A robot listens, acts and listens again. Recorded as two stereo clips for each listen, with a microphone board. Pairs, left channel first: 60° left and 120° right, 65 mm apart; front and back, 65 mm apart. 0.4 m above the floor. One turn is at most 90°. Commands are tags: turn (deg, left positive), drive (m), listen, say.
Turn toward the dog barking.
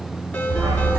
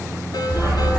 <turn deg="-90"/>
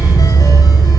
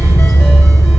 <turn deg="-20"/>
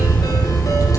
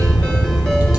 <say>Found it: a dog barking, straight ahead.</say>